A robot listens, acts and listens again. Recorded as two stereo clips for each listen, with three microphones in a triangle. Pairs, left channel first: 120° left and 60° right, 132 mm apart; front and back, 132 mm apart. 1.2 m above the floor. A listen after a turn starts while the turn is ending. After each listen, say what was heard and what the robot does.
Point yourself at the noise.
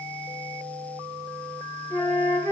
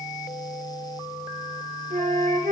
The flute: 170° right. Turn 170° right.
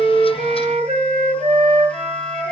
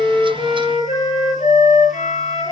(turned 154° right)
The flute is now 15° right. Turn 15° right.
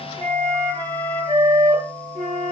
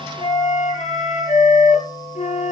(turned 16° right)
Found it: a flute, straight ahead.